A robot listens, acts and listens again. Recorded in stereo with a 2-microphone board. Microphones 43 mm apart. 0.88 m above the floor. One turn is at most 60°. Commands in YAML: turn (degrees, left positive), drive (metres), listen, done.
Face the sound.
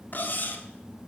turn: 45
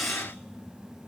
listen: true
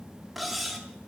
done: "Facing the cutlery clinking."